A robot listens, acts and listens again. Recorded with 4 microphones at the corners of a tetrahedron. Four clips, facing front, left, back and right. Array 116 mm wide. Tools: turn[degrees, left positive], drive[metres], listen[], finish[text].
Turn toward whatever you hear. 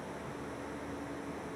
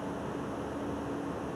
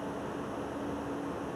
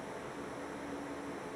Action: listen[]
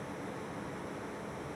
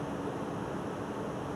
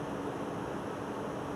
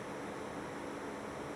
Action: listen[]
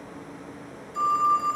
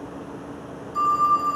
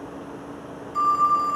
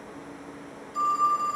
Thought: The phone ringing: 155° left.
Action: turn[155]
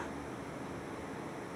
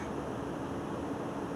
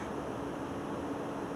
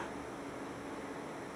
Action: listen[]
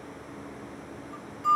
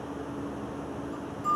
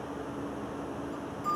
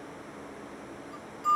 Thought: The phone ringing is now 15° left.
Action: turn[15]
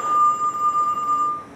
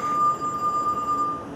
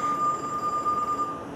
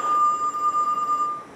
Action: finish[Found it: a phone ringing, straight ahead.]